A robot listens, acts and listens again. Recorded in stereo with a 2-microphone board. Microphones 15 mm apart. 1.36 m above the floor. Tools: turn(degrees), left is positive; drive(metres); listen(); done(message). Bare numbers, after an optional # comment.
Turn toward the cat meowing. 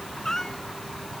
# The cat meowing: about 30° left or 150° left.
turn(30)
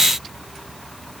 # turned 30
listen()
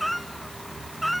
done("Found it: a cat meowing, straight ahead.")